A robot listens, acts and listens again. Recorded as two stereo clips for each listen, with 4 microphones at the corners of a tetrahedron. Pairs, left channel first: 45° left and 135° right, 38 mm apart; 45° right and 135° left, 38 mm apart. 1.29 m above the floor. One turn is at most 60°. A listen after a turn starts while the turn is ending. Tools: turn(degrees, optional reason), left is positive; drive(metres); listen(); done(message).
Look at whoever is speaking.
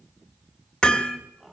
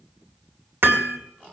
listen()
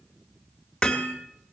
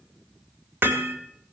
listen()
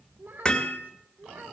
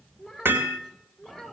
turn(degrees=-60, reason="The child speaking: 135° right.")
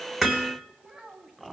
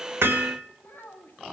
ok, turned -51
turn(degrees=-60, reason="The child speaking is now 75° right.")
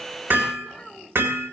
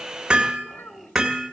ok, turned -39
turn(degrees=-35, reason="The child speaking is now 35° right.")
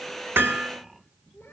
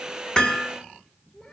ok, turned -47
turn(degrees=15, reason="Nothing new. It was at 15° left.")
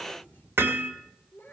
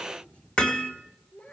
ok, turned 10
done("Facing the child speaking.")